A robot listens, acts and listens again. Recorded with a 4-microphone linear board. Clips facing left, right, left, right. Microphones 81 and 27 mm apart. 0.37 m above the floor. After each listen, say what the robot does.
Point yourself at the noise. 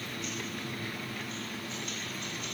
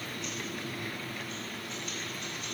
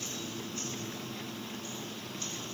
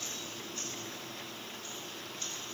Keep listening.
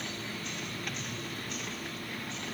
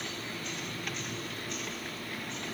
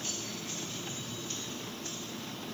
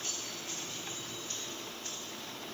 Keep listening.
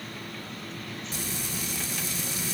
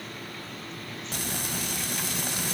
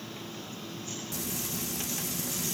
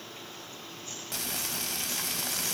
Turn 65° right.
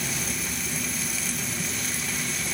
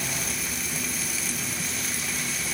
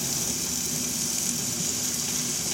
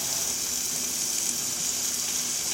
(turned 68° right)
Found it: frying, straight ahead, under 1 m away.